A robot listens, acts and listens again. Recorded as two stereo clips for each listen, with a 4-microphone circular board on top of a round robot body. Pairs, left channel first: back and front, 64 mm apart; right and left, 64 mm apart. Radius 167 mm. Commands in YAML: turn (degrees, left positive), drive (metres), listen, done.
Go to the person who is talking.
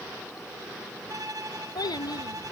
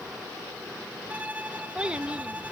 turn: 165
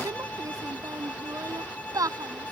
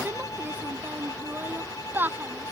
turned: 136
turn: 30
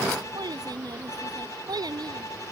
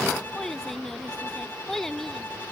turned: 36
drive: 1.0
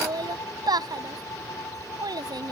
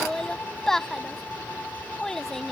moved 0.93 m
drive: 1.0
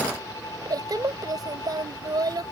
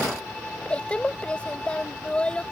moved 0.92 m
turn: -15
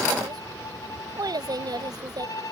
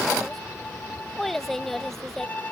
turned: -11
drive: 1.0
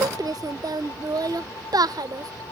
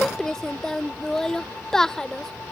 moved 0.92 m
drive: 1.0
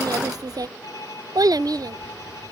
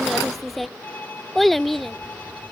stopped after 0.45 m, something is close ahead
done: "Arrived at the child speaking, straight ahead."